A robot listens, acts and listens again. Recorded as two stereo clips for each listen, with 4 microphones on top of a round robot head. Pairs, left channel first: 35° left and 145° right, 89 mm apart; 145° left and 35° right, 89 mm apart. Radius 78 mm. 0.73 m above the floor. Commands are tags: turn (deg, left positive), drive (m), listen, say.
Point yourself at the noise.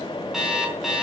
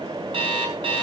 <turn deg="-60"/>
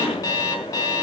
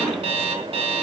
<turn deg="-20"/>
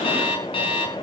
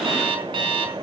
<say>Facing the alarm clock, over 4 m away.</say>